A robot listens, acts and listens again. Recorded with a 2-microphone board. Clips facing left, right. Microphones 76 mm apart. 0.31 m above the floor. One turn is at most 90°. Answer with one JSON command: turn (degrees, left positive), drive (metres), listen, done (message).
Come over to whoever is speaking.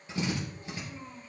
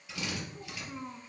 {"turn": -70}
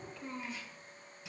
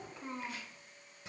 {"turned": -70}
{"turn": -25}
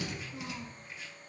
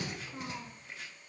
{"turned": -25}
{"turn": -25}
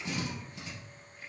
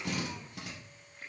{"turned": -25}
{"listen": true}
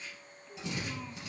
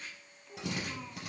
{"drive": 1.0}
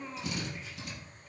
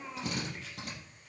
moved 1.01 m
{"drive": 1.0}
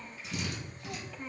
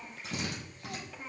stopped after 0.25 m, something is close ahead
{"done": "I am next to the child speaking."}